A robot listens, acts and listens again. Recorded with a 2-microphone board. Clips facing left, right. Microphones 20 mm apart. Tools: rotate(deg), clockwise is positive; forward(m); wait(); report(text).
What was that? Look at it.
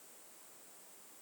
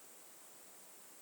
wait()
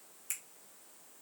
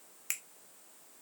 rotate(45)
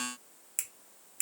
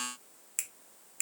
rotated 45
rotate(10)
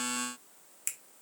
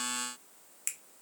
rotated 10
report("Found it: a finger snap, straight ahead, 1 to 2 m away.")